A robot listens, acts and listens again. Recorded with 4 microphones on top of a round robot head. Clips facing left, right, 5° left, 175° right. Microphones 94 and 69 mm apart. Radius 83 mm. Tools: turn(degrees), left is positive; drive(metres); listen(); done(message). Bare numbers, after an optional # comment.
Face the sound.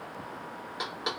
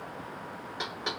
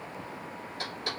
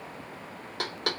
# The knocking: 165° left.
turn(165)
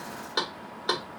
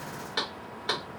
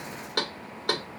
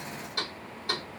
# The knocking is now 25° left.
turn(25)
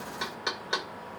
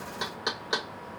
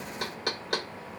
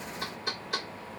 # The knocking is now 15° right.
turn(-15)
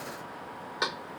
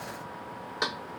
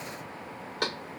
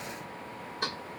done("Facing the knocking.")